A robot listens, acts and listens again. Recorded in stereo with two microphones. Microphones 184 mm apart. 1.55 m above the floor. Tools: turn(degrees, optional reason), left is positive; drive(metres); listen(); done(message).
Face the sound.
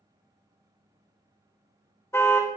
turn(degrees=30)
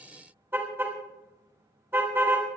turn(degrees=-15, reason="So it is at 15° right.")
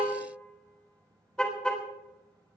done("Facing the car horn.")